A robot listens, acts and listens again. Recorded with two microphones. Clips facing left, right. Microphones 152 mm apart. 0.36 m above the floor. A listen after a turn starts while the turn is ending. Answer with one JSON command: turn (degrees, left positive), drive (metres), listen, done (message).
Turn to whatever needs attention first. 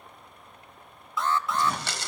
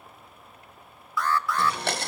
{"turn": 25}
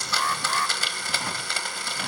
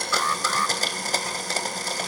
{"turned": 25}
{"turn": 130}
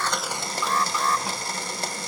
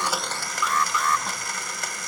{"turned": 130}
{"turn": 40}
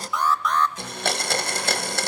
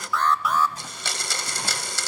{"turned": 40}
{"done": "Facing the alarm."}